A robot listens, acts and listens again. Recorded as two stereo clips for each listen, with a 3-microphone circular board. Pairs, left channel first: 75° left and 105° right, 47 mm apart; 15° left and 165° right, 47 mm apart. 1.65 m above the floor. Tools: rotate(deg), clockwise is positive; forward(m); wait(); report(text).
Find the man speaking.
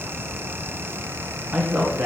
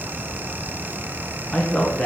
rotate(55)
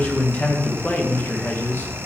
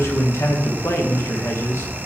rotate(-30)
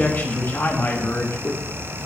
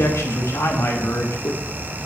rotate(-40)
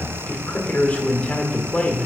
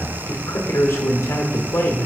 report("Facing the man speaking.")